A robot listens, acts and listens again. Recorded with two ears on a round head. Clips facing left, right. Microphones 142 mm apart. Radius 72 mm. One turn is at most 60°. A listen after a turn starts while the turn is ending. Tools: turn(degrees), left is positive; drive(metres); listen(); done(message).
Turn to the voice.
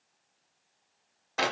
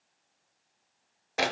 listen()
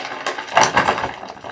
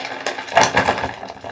listen()
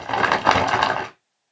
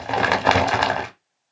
done("I can't make out anyone speaking to turn to.")